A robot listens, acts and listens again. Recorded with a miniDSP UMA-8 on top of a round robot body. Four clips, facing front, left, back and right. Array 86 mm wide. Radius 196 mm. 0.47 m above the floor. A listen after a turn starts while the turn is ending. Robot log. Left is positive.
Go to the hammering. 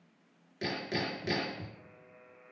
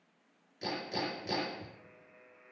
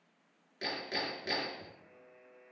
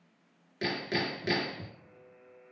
note: The hammering: 80° right.
cmd yaw -80
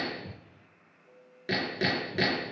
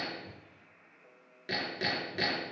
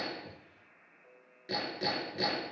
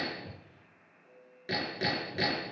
cmd fwd 1.0
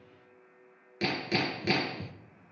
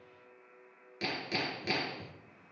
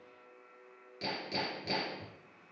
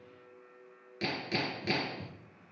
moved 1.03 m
cmd fwd 1.0
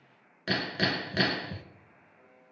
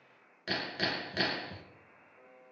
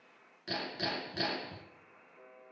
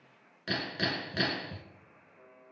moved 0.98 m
cmd fwd 1.0
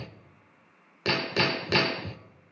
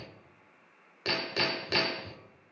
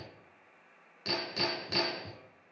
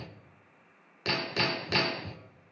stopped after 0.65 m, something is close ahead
end: I am next to the hammering.